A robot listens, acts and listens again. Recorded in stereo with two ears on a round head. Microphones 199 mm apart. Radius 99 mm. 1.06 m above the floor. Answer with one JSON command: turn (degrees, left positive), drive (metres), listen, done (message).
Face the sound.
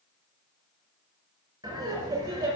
{"turn": -15}
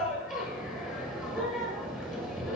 {"done": "Facing the laughter."}